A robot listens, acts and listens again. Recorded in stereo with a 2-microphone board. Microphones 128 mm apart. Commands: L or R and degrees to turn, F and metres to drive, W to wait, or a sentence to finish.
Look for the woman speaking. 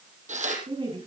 R40
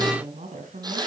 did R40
R105
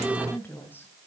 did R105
L15
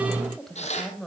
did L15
Facing the woman speaking, 2 to 4 m away.